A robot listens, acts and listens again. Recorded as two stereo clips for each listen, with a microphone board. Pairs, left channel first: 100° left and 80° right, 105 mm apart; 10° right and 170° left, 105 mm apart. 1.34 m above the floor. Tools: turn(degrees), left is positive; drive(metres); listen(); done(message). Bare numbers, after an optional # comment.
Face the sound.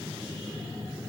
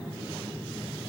listen()
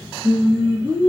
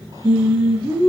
# The singing: 150° right.
turn(-150)
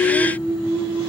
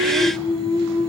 done("Facing the singing, 1 to 2 m away.")